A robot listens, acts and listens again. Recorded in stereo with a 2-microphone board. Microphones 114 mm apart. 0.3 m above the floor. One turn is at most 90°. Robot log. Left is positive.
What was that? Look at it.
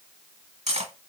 note: The cutlery clinking: about 65° right or 115° right.
cmd yaw -65
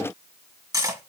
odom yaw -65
note: So it is at 35° right.
cmd yaw -35
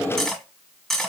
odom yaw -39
end: Found it: cutlery clinking, straight ahead.